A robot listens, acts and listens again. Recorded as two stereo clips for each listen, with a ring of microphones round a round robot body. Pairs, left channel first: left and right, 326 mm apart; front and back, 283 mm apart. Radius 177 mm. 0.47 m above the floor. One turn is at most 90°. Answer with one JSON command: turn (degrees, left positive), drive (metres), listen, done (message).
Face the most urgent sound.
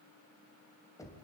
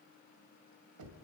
{"listen": true}
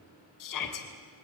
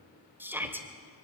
{"turn": 90}
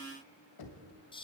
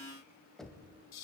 {"turn": 15}
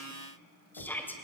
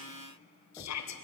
{"done": "Facing the shout, 2 to 4 m away."}